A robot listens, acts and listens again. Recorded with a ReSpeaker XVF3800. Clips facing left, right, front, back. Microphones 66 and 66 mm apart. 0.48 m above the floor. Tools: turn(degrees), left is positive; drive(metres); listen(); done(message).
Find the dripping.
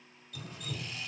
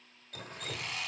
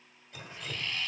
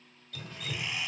turn(degrees=-65)
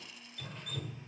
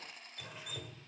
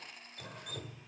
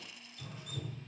turn(degrees=-10)
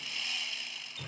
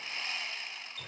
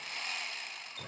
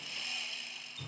done("Found it: dripping, straight ahead.")